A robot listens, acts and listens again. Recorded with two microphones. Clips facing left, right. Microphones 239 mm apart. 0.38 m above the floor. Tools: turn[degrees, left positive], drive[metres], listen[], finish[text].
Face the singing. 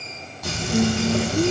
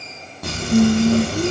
Thought: The singing: about 25° right or 155° right.
Action: turn[-25]
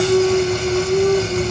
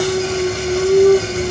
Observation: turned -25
Thought: The singing: about 40° right or 140° right.
Action: turn[-40]
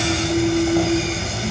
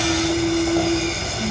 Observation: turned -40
Thought: So it is at 120° right.
Action: turn[-120]
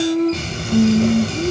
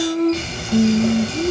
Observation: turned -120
Action: finish[Facing the singing, over 4 m away.]